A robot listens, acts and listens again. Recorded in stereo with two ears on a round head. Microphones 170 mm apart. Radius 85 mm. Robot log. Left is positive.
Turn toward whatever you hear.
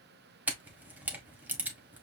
cmd yaw -30
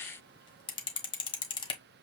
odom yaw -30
note: So it is at 25° left.
cmd yaw +25
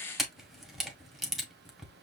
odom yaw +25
end: Found it: a camera shutter, straight ahead, 1 to 2 m away.